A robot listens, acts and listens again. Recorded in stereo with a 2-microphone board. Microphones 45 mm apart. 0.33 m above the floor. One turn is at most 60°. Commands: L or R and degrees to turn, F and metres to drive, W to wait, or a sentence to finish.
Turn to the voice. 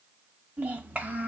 R40
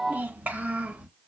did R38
R30
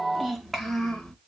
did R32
L10
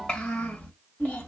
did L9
L35
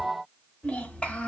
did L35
L20
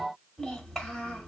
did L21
Found it: a child speaking, straight ahead, 1 to 2 m away.